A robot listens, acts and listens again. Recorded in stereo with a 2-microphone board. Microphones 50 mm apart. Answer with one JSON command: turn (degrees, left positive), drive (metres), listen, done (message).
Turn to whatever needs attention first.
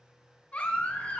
{"turn": 30}
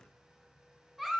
{"done": "Found it: a baby crying, straight ahead, 1 to 2 m away."}